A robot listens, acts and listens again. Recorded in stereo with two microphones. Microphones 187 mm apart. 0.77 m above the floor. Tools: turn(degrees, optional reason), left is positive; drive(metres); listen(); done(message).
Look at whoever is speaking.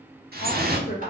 turn(degrees=50, reason="The woman speaking: about 50° left or 130° left.")
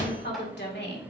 turn(degrees=65, reason="So it is at 65° left.")
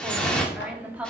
turn(degrees=-10, reason="The woman speaking is now 10° right.")
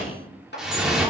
listen()
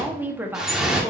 turn(degrees=-10, reason="The woman speaking is now 10° right.")
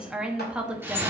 done("Facing the woman speaking.")